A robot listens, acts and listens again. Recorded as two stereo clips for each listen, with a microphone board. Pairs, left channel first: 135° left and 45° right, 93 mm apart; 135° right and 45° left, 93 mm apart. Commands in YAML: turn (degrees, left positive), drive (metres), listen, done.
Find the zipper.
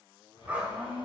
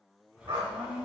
turn: 150
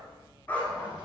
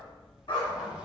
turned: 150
turn: -30
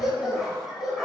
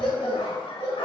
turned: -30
listen: true
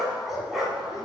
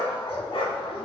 listen: true
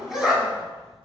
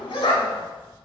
turn: -10
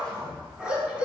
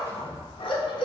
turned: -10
done: "Found it: a zipper, straight ahead, 1 to 2 m away."